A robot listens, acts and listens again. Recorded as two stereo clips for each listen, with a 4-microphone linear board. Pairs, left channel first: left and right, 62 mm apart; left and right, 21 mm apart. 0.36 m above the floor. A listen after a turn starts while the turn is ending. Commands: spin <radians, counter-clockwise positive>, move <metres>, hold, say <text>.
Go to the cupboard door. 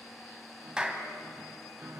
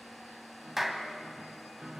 hold
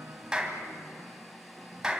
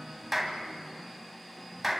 hold
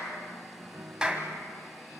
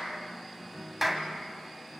say I can't make out a cupboard door, only a piano and a clap.